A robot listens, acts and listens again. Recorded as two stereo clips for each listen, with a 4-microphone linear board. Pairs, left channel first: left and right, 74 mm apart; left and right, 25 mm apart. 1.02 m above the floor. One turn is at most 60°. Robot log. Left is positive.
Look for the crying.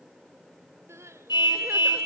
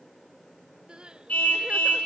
note: The crying: about 40° right or 140° right.
cmd yaw -40
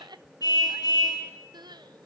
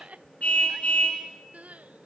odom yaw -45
note: So it is at 95° right.
cmd yaw -60
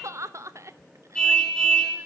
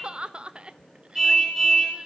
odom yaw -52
note: The crying is now 45° right.
cmd yaw -45
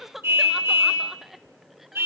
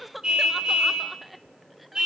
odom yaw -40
end: Facing the crying, under 1 m away.